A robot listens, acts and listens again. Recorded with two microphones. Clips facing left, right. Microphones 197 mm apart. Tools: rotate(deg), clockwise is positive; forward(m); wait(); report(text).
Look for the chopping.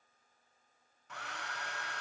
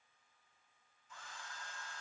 wait()
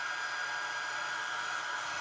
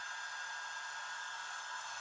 wait()
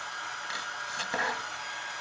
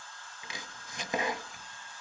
rotate(20)
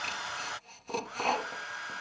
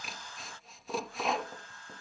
report("Found it: chopping, straight ahead.")